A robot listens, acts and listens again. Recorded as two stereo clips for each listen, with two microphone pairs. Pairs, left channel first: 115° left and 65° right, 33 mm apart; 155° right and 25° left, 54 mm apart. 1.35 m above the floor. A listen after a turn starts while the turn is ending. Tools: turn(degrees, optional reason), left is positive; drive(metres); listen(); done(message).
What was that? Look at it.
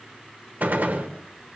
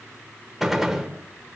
turn(degrees=-60, reason="The gunshot: 60° right.")
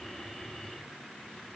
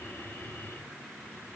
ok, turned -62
done("I heard a gunshot from this way, but can't make it out now.")